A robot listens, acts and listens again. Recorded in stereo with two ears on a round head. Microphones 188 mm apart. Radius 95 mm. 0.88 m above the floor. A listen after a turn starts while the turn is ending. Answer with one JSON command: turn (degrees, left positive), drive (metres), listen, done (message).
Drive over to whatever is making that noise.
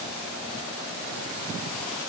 {"listen": true}
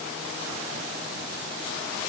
{"listen": true}
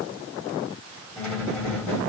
{"turn": 30}
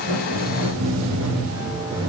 {"turn": -25}
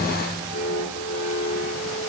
{"turn": -20}
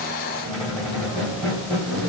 {"drive": 1.0}
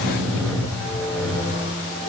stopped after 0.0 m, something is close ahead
{"done": "Something is in my way. I am facing the squeak but have not reached it."}